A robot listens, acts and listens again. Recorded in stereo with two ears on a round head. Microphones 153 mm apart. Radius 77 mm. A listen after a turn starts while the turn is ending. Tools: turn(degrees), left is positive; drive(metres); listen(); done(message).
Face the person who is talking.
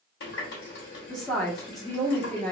turn(degrees=30)
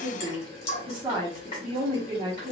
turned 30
turn(degrees=-30)
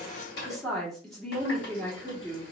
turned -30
done("Found it: a woman speaking, straight ahead, 1 to 2 m away.")